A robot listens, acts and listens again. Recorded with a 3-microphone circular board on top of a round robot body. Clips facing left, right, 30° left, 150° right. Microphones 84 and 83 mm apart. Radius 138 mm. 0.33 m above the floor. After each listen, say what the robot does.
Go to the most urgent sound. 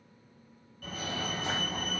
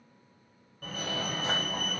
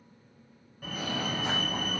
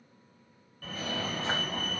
Turn 45° right.
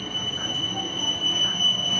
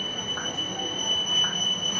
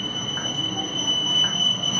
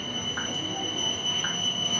Turn 10° right.
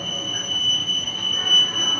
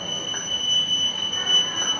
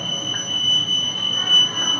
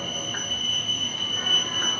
Drive 1.0 m forward.
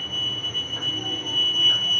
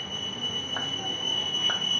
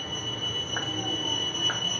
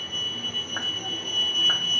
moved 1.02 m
Drive 1.0 m forward.
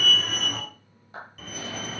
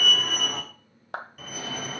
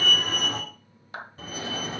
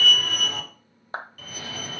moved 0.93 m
Drive 1.0 m forward.
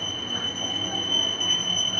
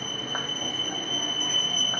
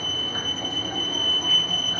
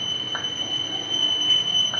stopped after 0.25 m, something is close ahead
Turn 10° right.
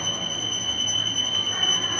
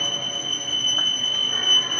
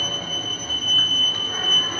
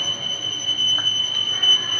Arrived at the fire alarm, straight ahead.